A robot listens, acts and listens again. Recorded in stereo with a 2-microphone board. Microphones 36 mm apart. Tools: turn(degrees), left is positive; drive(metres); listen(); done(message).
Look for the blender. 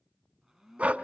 turn(degrees=-30)
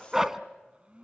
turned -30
turn(degrees=-145)
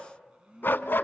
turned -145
turn(degrees=-30)
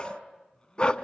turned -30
turn(degrees=20)
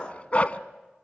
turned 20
listen()
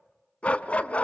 listen()
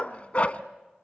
done("I heard a blender from this way, but can't make it out now.")